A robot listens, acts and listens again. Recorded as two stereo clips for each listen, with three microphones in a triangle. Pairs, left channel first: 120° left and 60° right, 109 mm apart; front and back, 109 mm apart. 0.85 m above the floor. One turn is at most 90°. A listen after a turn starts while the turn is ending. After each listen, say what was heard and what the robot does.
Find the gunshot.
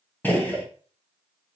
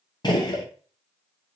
The gunshot: 50° left. Turn 50° left.
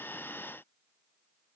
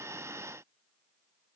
I heard a gunshot from this way, but can't make it out now.